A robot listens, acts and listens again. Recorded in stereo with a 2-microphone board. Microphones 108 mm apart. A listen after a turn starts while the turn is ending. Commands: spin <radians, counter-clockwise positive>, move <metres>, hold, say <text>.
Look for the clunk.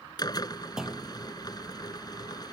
spin -0.52
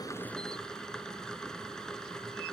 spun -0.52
hold
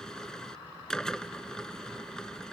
say I heard a clunk, but can't make it out now. It was about 25° left or 145° right.